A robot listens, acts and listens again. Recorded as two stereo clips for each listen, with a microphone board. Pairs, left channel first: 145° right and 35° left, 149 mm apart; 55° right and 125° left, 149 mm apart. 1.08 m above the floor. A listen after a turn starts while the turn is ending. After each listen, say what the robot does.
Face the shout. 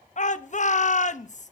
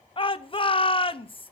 Turn 110° right.
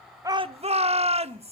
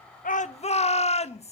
Turn 10° right.
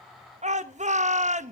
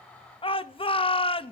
Facing the shout.